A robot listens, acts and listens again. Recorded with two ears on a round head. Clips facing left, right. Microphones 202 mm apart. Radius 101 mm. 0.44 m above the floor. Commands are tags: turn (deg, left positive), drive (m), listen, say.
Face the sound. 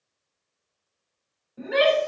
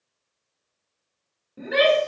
<turn deg="-40"/>
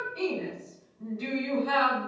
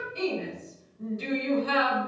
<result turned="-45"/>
<turn deg="-85"/>
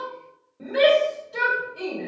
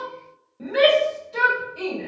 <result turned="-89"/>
<say>Found it: a shout, straight ahead, 2 to 4 m away.</say>